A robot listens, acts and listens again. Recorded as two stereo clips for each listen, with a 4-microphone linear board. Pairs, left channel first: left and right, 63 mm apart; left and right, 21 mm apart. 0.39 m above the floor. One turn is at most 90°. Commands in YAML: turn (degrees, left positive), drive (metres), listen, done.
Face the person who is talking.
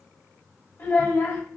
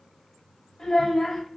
turn: 35
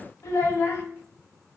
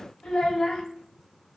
turn: 90
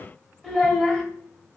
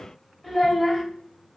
turn: 10
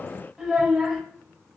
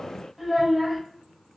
done: "Found it: a child speaking, straight ahead, under 1 m away."